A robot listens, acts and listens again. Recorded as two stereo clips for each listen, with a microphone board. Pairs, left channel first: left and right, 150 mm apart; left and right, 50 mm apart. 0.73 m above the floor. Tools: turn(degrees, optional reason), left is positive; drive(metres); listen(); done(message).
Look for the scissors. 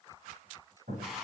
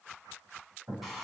listen()
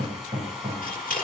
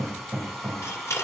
turn(degrees=65, reason="The scissors: about 65° left or 115° left.")
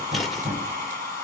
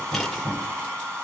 listen()
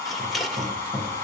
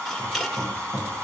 done("Found it: scissors, straight ahead.")